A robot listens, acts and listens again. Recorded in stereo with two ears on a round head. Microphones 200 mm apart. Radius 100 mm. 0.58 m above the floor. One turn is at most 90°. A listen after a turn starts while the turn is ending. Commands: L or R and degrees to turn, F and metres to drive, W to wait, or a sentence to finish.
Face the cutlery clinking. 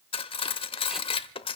L25
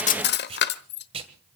L90
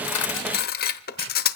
L45
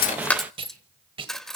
Found it: cutlery clinking, straight ahead, 1 to 2 m away.